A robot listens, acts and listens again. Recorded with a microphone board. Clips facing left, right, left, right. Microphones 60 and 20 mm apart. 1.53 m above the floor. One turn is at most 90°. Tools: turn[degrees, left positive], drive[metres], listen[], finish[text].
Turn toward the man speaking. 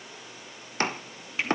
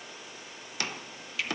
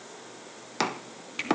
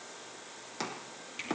Action: listen[]
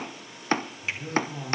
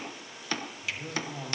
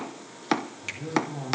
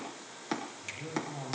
Action: turn[-30]
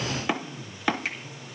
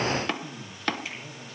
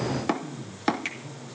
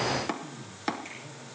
Thought: So it is at 130° right.
Action: turn[-90]
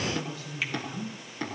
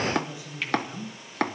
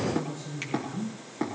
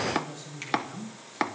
Thought: The man speaking is now 15° right.
Action: turn[-15]
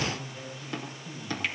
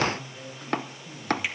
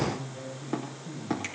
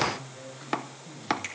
Action: finish[Found it: a man speaking, straight ahead.]